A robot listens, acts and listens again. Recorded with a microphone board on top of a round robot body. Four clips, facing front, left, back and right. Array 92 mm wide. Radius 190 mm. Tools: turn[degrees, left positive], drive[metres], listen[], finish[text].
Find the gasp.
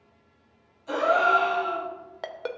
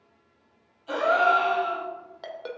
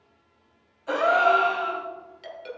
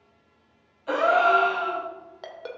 Thought: The gasp: 120° right.
Action: turn[-120]
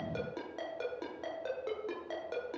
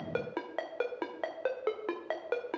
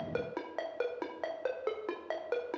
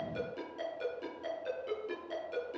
Action: finish[Facing where the gasp came from. I can't hear it now.]